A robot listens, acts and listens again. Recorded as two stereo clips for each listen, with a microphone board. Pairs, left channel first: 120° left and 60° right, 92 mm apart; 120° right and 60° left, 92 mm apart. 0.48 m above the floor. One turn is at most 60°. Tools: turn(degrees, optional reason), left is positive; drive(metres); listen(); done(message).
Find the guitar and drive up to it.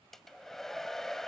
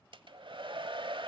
listen()
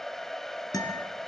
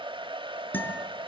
turn(degrees=60, reason="The guitar: 170° left.")
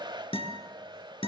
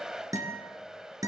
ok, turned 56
turn(degrees=60, reason="The guitar is now 115° left.")
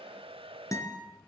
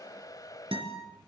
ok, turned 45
turn(degrees=60, reason="The guitar is now 65° left.")
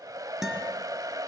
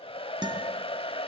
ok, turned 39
turn(degrees=25, reason="The guitar is now 25° left.")
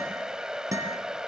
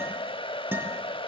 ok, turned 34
drive(metres=1.0)
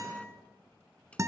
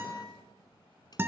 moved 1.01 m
drive(metres=1.0)
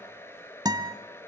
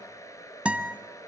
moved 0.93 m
turn(degrees=-15, reason="The guitar is now 15° right.")
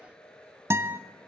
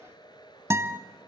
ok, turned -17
drive(metres=1.0)
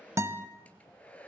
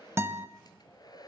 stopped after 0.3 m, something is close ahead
done("Arrived at the guitar, straight ahead.")